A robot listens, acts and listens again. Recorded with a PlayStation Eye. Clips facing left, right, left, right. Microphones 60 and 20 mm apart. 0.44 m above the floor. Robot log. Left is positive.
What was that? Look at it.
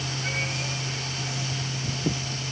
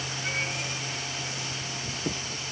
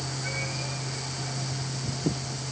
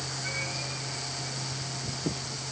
cmd idle
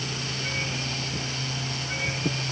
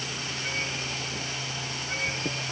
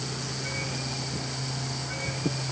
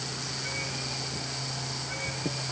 cmd idle
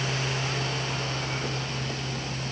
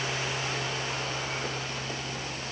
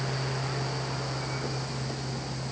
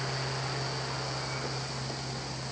end: I can't make out anything to turn to.